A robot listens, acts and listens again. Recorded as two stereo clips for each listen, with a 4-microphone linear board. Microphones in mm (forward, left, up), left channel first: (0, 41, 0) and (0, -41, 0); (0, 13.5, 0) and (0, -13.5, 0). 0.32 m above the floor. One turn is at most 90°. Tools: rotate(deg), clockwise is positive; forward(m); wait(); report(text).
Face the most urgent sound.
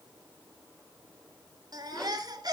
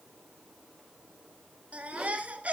rotate(55)
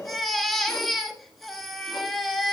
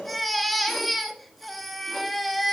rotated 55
report("Facing the baby crying, 1 to 2 m away.")